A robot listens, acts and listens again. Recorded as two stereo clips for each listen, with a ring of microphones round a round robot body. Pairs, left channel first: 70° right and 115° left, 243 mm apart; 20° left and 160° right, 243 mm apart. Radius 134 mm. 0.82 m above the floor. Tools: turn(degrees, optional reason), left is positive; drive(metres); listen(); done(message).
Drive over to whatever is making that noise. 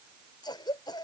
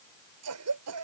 turn(degrees=-140, reason="The cough: 140° right.")
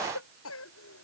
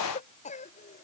turn(degrees=-40, reason="The cough is now 40° right.")
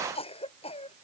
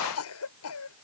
drive(metres=1.0)
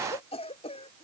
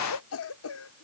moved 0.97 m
drive(metres=1.0)
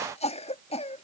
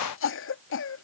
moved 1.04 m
drive(metres=1.0)
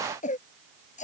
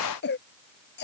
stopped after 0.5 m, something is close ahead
turn(degrees=-15, reason="The cough is now 15° right.")
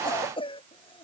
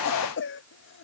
done("Arrived at the cough, straight ahead.")